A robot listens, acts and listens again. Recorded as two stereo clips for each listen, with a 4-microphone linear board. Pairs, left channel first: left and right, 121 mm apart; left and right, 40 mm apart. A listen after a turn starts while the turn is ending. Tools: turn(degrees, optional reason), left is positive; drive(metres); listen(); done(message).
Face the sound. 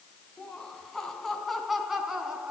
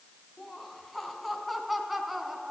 turn(degrees=-30)
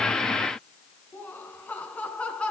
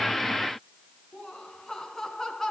turn(degrees=10, reason="So it is at 10° left.")
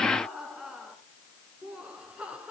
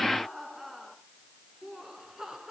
turn(degrees=-10, reason="The laughter is now 10° right.")
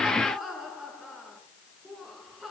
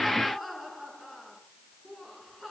done("Found it: laughter, straight ahead, over 4 m away.")